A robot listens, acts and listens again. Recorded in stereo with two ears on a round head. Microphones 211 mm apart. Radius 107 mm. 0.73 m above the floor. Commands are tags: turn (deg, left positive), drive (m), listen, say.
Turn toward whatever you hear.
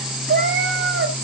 <turn deg="-50"/>
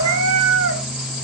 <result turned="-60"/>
<turn deg="-50"/>
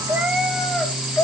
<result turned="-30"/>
<turn deg="10"/>
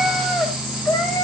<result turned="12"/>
<turn deg="15"/>
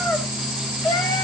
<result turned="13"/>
<turn deg="15"/>
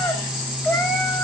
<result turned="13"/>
<say>Facing the cat meowing.</say>